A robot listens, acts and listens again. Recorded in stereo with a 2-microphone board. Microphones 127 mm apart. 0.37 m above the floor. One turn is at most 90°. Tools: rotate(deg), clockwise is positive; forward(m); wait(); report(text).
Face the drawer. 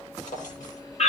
rotate(-90)
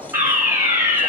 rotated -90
rotate(-10)
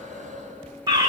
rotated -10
wait()
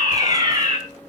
wait()
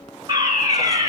report("I heard a drawer from this way, but can't make it out now.")